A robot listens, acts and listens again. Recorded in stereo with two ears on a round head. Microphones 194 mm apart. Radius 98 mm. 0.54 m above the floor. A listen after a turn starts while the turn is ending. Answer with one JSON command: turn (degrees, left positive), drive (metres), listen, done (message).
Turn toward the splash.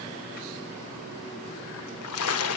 {"turn": 75}
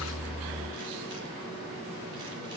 {"listen": true}
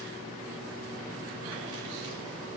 {"done": "I heard a splash, but can't make it out now. It was about straight ahead or 30° left."}